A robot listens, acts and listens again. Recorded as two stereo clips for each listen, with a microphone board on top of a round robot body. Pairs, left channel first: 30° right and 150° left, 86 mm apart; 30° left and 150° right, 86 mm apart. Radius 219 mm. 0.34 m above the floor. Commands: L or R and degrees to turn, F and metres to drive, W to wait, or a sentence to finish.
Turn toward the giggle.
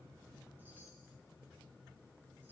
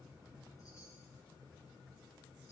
W
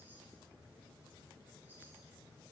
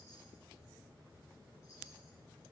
W
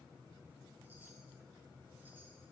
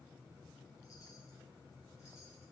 I can't make out a giggle.